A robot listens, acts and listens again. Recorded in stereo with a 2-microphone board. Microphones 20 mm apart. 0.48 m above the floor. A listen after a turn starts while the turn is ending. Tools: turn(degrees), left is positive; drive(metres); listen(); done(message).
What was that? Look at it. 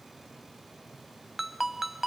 turn(degrees=-30)
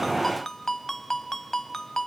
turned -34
turn(degrees=20)
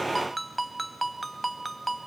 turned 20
done("Found it: a ringtone, straight ahead.")